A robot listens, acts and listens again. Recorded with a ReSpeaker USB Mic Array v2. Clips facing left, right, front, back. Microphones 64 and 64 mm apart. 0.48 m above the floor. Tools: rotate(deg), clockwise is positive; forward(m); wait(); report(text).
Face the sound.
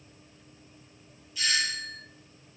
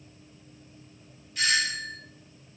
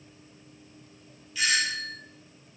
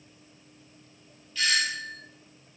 rotate(70)
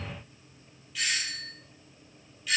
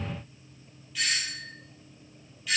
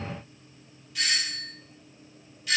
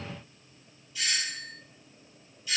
report("Found it: a doorbell, straight ahead.")